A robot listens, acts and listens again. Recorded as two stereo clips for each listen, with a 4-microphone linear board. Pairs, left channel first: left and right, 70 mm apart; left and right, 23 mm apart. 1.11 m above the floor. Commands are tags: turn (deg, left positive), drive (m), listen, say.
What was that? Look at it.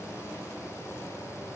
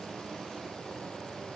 <listen/>
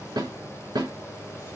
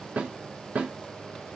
<turn deg="-90"/>
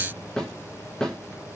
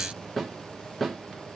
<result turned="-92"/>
<say>Facing the snare drum.</say>